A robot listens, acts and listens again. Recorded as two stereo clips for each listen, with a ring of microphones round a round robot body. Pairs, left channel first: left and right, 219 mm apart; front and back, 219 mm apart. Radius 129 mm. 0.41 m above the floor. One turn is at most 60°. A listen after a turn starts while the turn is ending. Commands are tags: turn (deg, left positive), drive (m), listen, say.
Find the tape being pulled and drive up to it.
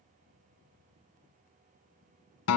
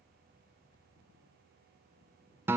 <listen/>
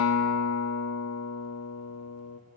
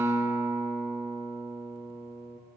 <listen/>
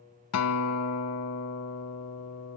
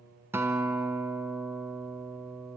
<say>I can't make out tape being pulled, only a guitar.</say>